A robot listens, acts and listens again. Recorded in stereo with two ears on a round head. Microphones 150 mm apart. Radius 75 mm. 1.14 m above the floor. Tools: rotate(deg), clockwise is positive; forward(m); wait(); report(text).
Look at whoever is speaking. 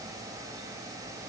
wait()
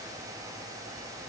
wait()
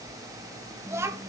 rotate(15)
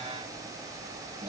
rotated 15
wait()
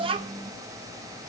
rotate(150)
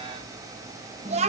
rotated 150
rotate(40)
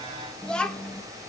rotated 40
report("Facing the child speaking.")